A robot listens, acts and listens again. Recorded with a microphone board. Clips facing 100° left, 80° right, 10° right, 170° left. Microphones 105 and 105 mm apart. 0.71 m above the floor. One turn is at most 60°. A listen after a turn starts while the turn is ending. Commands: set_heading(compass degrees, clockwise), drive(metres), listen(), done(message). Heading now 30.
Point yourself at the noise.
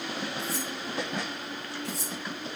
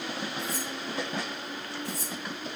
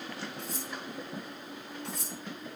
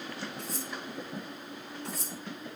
set_heading(330)
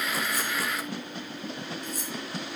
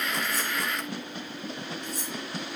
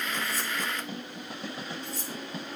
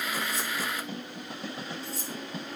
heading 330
set_heading(270)
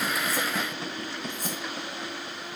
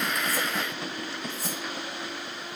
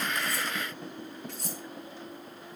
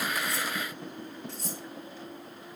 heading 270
listen()
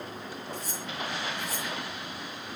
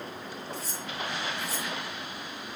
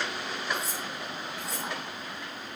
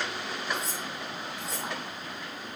set_heading(245)
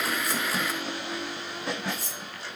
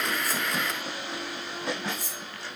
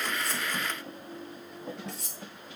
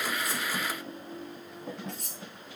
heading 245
set_heading(255)
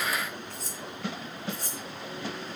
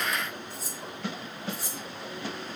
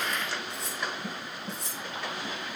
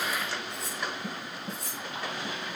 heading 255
done("Facing the cutlery clinking.")